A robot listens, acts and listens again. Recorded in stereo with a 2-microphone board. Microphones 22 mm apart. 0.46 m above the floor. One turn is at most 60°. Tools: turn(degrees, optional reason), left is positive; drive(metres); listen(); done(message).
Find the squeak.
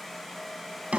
listen()
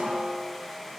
listen()
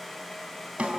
done("I can't make out a squeak to turn to.")